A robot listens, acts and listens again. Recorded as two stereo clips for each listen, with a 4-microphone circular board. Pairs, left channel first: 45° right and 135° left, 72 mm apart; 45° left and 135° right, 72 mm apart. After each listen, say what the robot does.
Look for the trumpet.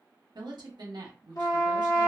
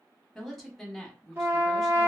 Turn 75° right.
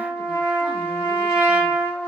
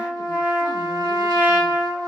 Turn 10° left.
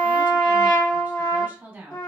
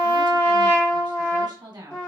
Found it: a trumpet, straight ahead.